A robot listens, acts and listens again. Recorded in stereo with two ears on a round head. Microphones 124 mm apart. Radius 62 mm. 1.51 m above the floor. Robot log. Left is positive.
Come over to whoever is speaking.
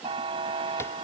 cmd idle
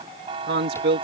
cmd yaw -90
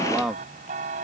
cmd fwd 1.0
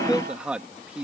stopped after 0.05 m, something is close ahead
end: Something is in my way. I am facing the man speaking but have not reached it.